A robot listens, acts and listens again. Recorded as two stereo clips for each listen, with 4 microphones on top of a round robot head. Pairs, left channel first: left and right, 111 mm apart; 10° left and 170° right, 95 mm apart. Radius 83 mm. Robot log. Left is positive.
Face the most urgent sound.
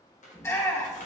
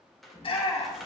note: The shout: 25° left.
cmd yaw +25
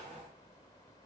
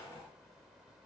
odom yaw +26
cmd idle
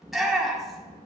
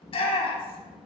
end: Found it: a shout, straight ahead.